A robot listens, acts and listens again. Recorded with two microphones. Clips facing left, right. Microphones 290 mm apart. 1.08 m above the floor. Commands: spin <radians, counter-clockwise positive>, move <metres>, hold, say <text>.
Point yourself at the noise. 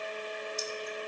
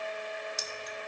spin -1.57
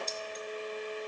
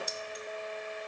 spin -0.17
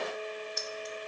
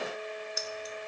say Found it: keys jangling, straight ahead.